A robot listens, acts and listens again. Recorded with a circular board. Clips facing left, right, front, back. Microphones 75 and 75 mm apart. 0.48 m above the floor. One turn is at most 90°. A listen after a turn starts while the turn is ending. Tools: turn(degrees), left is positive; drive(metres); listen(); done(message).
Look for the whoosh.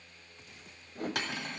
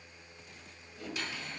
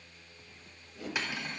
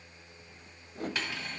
turn(degrees=90)
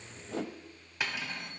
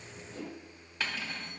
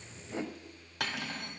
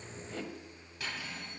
turn(degrees=70)
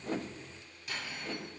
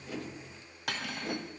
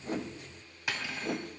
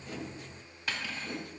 turn(degrees=-20)
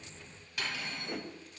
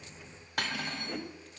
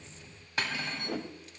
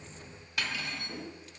done("Facing the whoosh.")